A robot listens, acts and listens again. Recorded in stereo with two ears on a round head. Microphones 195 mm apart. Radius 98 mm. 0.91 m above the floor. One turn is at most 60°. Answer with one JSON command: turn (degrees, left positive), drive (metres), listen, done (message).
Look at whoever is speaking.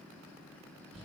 {"listen": true}
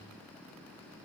{"listen": true}
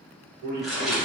{"turn": -45}
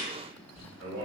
{"turn": -60}
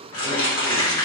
{"turn": -15}
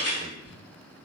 {"listen": true}
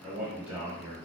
{"done": "Facing the man speaking."}